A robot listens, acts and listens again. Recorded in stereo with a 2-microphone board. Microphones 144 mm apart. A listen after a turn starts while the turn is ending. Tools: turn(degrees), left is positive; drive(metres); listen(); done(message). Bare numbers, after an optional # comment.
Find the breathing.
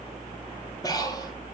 # The breathing: about 25° left or 155° left.
turn(25)
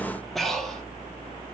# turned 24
done("Found it: breathing, straight ahead, 2 to 4 m away.")